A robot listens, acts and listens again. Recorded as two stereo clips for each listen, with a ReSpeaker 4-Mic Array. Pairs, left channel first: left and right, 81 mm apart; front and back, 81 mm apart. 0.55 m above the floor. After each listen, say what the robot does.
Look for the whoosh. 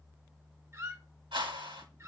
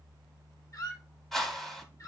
Turn 85° right.
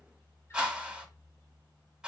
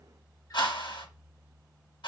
Turn 10° right.
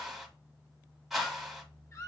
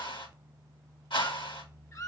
Facing the whoosh, 1 to 2 m away.